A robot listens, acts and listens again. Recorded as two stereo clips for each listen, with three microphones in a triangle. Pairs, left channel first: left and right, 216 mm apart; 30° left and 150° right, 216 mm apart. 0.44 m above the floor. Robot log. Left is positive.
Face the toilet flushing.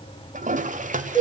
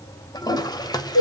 note: The toilet flushing: 40° right.
cmd yaw -40
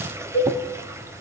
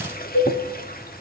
note: The toilet flushing is now 15° right.
cmd yaw -15
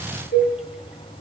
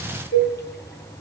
cmd idle
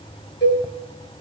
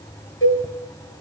cmd idle
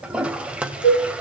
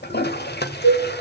end: Facing the toilet flushing, 1 to 2 m away.